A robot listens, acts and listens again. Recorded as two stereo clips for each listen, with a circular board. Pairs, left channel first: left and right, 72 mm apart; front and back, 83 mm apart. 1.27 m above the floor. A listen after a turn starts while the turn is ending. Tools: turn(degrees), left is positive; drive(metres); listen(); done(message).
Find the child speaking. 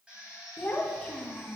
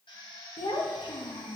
done("Facing the child speaking.")